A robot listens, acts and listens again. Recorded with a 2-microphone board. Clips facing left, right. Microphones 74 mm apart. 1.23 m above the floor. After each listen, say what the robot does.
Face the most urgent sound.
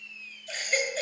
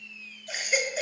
Turn 30° right.
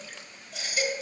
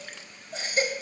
Turn 140° right.
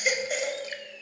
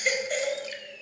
Found it: a baby crying, straight ahead.